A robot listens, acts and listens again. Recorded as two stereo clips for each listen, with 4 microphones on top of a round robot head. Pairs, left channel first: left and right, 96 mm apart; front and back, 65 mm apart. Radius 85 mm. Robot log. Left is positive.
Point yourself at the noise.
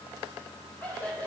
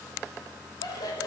note: The laughter: 15° left.
cmd yaw +15
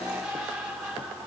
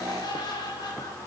end: Found it: laughter, straight ahead.